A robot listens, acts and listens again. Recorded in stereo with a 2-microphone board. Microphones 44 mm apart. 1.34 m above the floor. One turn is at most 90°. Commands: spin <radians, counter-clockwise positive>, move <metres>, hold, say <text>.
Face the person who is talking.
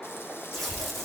spin 1.13
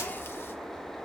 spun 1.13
say Facing the child speaking.